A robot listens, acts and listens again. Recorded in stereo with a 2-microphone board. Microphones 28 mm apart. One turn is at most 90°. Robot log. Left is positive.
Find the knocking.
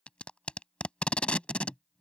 cmd idle
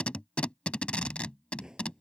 note: The knocking: about 25° right or 155° right.
cmd yaw -25
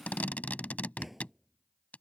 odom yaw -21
end: Found it: knocking, straight ahead.